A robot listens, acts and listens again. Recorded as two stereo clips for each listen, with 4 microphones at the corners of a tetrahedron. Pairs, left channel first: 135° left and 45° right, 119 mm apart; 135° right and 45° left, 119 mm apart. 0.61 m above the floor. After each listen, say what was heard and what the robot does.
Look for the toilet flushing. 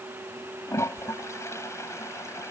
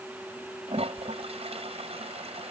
The toilet flushing: 70° left. Turn 70° left.
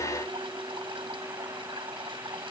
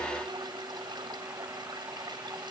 Facing the toilet flushing.